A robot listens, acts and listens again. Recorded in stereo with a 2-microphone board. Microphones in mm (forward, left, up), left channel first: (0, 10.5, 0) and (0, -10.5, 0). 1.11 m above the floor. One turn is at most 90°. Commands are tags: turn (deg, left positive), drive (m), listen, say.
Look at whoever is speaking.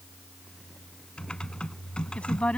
<turn deg="70"/>
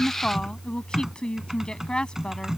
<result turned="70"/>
<turn deg="40"/>
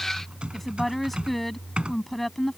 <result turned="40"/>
<say>Facing the woman speaking.</say>